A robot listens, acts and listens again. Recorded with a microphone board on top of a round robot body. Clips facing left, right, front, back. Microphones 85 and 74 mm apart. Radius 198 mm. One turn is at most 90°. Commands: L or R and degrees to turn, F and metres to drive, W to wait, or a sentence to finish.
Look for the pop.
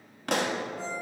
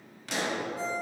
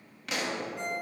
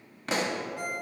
L90
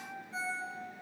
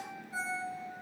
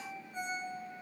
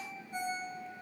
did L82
L40
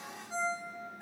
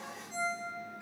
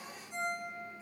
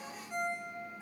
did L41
I heard a pop from this way, but can't make it out now.